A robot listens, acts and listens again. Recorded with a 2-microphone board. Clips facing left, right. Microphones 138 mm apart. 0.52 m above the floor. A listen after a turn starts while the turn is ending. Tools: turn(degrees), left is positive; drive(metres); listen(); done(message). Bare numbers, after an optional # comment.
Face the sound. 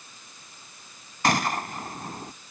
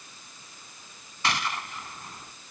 # The gunshot: about 45° left or 135° left.
turn(45)
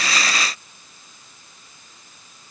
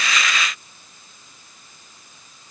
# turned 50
listen()
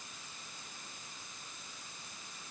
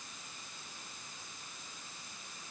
done("I heard a gunshot, but can't make it out now. It was about 5° right or 85° left.")